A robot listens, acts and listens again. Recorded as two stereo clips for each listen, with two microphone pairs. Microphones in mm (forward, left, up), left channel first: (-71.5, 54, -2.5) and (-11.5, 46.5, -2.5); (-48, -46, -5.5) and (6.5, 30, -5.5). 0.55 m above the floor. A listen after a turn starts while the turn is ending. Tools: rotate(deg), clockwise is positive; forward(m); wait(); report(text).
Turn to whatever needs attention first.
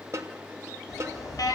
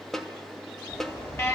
rotate(-175)
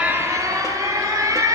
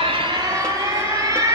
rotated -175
rotate(-10)
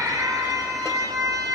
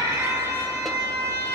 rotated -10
report("Facing the alarm.")